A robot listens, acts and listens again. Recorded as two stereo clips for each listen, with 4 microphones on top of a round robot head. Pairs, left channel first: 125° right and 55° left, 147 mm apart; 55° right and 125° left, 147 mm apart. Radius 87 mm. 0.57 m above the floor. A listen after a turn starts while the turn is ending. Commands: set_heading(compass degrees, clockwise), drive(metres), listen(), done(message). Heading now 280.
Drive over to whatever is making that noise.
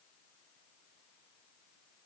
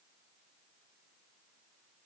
listen()
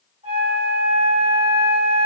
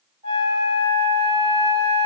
set_heading(195)
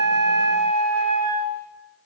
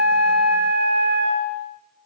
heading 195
set_heading(180)
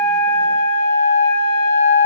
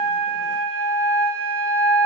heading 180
drive(1.0)
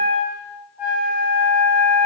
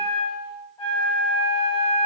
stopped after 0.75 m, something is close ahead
set_heading(190)
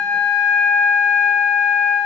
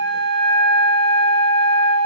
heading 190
done("Arrived at the flute, straight ahead.")